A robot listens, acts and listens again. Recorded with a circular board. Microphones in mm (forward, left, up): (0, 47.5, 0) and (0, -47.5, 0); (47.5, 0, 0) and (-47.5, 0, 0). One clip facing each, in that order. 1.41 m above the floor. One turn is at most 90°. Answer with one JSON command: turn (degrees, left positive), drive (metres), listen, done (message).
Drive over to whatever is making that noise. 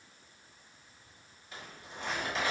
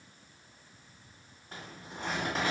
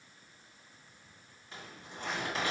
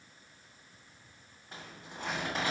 {"turn": -90}
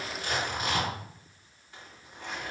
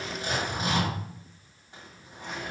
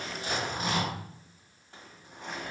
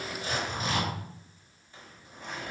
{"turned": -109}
{"turn": -20}
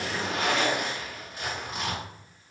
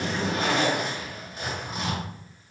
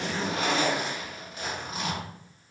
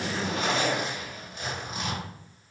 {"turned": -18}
{"drive": 1.0}
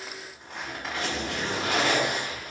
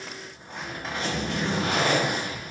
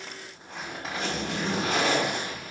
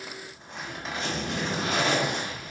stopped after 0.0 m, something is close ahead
{"done": "Blocked. The zipper is further on, straight ahead."}